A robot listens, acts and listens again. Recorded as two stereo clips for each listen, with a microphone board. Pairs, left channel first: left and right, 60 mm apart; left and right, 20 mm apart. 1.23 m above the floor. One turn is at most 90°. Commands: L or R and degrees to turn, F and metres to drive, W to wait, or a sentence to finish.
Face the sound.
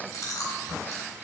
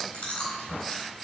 L75
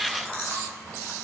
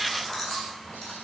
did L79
L25
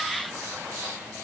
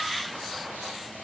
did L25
W
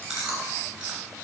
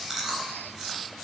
Found it: chewing, straight ahead.